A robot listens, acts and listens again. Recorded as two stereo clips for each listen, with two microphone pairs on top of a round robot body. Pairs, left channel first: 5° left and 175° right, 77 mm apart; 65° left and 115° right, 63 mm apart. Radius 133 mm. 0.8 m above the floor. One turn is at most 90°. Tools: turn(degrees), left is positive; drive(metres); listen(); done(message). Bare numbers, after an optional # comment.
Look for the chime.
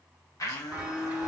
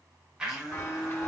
# The chime: 105° left.
turn(90)
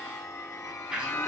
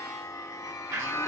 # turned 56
# The chime is now 50° left.
turn(50)
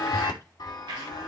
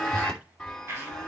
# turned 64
# The chime is now 15° right.
turn(-15)
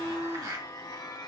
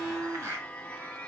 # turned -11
done("Found it: a chime, straight ahead, 2 to 4 m away.")